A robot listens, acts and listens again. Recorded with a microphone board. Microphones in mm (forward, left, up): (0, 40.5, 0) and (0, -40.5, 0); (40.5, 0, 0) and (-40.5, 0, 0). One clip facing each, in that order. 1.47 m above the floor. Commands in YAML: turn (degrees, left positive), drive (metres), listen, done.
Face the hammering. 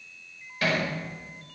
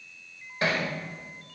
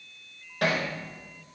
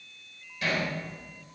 turn: -30
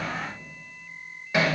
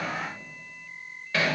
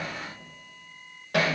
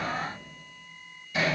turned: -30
turn: 15
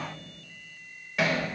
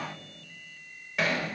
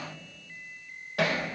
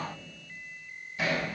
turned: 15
done: "Facing the hammering, over 4 m away."